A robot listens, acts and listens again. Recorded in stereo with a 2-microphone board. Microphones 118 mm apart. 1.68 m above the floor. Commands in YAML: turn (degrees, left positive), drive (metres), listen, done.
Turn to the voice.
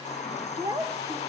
turn: -30
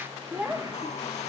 turn: -10
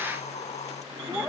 done: "Found it: a child speaking, straight ahead, under 1 m away."